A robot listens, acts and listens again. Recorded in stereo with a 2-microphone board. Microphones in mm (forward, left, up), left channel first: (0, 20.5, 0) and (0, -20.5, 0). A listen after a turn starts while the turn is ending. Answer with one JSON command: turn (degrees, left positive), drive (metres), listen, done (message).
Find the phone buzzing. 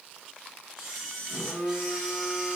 {"turn": 45}
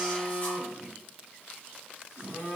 {"turn": 90}
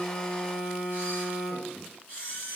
{"done": "Facing the phone buzzing."}